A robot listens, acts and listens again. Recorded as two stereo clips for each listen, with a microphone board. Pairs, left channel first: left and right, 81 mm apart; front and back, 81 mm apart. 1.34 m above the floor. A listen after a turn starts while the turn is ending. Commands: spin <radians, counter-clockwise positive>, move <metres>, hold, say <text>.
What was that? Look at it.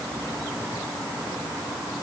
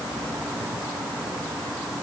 hold
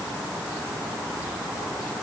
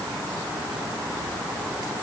hold
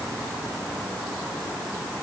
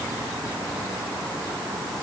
say I can't make out anything.